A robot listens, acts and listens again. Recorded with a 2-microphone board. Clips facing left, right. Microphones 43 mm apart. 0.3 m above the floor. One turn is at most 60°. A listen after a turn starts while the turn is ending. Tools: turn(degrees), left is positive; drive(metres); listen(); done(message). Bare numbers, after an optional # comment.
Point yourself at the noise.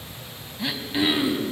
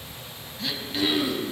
# The throat clearing: about 20° left or 160° left.
turn(20)
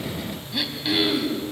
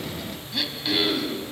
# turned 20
done("Found it: throat clearing, straight ahead, 2 to 4 m away.")